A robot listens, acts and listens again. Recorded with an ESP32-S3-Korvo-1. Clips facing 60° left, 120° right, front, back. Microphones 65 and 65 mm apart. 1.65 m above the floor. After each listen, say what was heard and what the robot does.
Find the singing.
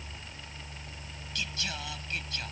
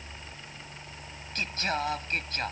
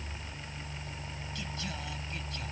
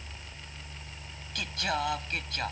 The singing: 165° right. Turn 165° right.
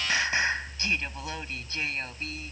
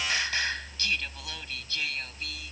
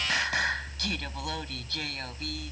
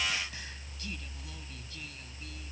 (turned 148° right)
Found it: singing, straight ahead.